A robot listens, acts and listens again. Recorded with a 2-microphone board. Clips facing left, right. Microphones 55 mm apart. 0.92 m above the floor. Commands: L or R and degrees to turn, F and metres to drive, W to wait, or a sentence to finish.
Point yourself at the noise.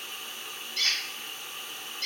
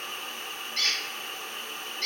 R55
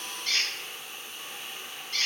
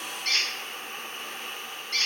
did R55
R70
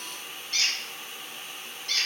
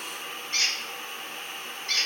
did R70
R35
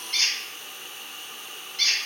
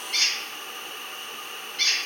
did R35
Found it: a squeak, straight ahead, 1 to 2 m away.